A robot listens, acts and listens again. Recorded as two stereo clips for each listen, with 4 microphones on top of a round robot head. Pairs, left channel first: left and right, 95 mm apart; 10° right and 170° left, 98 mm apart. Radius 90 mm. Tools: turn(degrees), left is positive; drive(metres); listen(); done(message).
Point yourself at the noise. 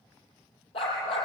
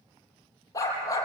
turn(degrees=45)
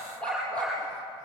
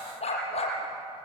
turn(degrees=10)
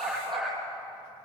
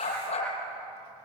done("Facing the dog barking.")